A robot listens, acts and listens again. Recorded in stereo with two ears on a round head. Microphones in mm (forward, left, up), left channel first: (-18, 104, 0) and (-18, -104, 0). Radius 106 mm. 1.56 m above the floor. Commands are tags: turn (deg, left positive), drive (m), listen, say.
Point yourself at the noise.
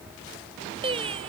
<turn deg="-25"/>
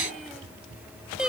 <say>Facing the singing.</say>